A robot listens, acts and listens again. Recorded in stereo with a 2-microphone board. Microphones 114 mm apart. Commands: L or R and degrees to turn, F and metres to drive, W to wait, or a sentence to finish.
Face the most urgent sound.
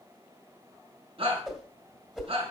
R50
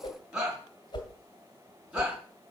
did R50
Facing the shout.